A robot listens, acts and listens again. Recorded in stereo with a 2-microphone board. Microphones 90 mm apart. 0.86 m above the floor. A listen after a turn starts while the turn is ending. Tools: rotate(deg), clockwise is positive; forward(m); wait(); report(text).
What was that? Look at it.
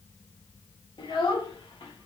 rotate(-70)
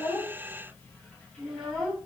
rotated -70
report("Facing the child speaking, 1 to 2 m away.")